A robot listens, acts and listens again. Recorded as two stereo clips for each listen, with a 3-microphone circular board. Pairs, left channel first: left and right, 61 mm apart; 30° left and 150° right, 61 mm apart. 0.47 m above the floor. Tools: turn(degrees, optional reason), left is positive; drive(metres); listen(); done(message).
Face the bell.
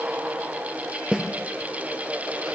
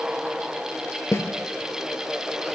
listen()
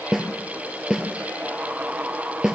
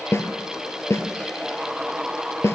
listen()
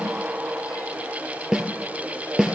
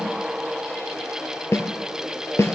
done("I can't make out a bell to turn to.")